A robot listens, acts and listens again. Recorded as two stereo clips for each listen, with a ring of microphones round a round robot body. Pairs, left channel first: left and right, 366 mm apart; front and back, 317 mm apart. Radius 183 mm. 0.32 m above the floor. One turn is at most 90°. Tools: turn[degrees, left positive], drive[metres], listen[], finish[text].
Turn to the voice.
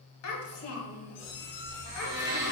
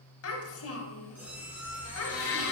Thought: The child speaking: 40° left.
Action: turn[40]
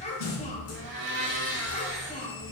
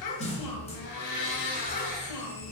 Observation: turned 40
Thought: The child speaking is now 20° left.
Action: turn[20]
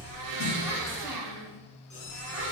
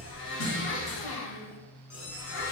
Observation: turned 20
Action: listen[]
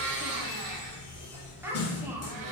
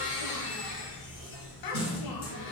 Action: finish[Facing the child speaking, 1 to 2 m away.]